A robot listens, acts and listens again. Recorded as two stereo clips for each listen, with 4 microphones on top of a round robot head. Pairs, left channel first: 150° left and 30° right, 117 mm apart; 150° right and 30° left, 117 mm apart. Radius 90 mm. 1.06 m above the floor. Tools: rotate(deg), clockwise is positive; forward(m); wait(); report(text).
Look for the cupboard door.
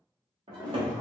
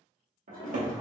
rotate(-20)
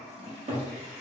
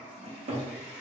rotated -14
report("Found it: a cupboard door, straight ahead, 1 to 2 m away.")